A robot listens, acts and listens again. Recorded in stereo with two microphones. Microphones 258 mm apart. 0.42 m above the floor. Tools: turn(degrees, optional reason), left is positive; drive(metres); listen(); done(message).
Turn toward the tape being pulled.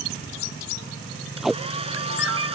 turn(degrees=30)
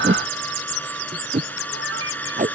turn(degrees=-30, reason="So it is at 30° right.")
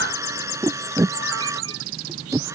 turn(degrees=-10, reason="The tape being pulled is now 10° right.")
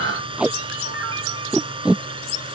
done("Facing the tape being pulled.")